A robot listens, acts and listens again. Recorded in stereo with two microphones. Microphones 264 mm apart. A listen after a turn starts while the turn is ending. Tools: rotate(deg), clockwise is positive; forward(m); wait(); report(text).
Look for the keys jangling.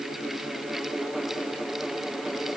wait()
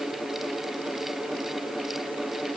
wait()
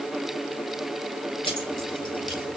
rotate(-20)
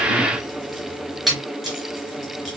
report("Facing the keys jangling, 2 to 4 m away.")